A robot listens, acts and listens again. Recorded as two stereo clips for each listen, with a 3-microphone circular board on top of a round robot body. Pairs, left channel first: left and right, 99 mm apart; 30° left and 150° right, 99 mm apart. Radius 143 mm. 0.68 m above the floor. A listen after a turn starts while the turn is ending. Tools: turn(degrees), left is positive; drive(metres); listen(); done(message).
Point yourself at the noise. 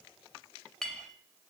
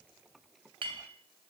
turn(degrees=175)
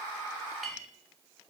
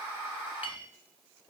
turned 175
done("Found it: a clink, straight ahead.")